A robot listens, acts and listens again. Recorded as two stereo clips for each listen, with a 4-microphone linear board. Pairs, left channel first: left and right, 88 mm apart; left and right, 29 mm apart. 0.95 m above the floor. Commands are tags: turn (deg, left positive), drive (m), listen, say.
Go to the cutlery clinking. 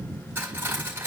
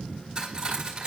<turn deg="-25"/>
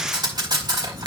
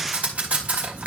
<turn deg="-130"/>
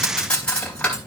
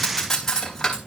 <turn deg="15"/>
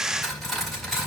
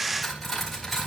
<drive m="1.0"/>
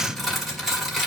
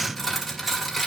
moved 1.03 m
<drive m="1.0"/>
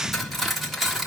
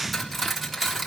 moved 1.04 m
<drive m="1.0"/>
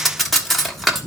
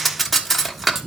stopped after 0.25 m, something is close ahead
<say>I am next to the cutlery clinking.</say>